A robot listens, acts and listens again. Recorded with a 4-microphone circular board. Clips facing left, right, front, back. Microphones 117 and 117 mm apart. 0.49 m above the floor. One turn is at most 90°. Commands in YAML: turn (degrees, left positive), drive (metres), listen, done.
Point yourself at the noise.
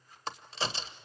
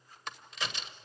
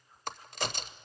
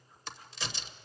turn: 35
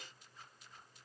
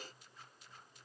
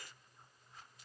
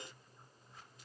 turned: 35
done: "I heard a crack from this way, but can't make it out now."